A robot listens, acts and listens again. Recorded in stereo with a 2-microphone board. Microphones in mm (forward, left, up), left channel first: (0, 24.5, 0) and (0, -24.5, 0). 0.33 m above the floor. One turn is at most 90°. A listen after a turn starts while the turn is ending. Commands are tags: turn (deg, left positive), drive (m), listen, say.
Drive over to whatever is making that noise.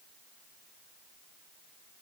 <listen/>
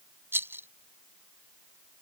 <turn deg="-55"/>
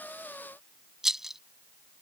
<turn deg="-10"/>
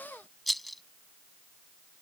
<drive m="1.0"/>
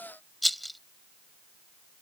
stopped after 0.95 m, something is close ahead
<say>Arrived at the rattle, straight ahead.</say>